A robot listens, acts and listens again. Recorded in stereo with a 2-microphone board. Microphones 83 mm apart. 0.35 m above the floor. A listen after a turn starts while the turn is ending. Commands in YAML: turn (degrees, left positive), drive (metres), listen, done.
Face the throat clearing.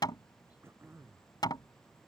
turn: -30
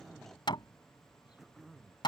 done: "Facing the throat clearing."